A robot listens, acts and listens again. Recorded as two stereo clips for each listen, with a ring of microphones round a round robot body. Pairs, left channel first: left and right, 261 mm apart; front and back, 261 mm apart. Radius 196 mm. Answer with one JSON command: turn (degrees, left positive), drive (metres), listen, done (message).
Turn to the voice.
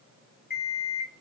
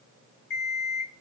{"listen": true}
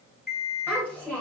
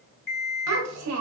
{"turn": 175}
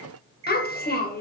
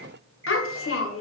{"turn": 35}
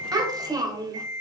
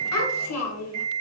{"turn": -15}
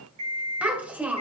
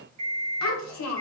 {"done": "Found it: a child speaking, straight ahead."}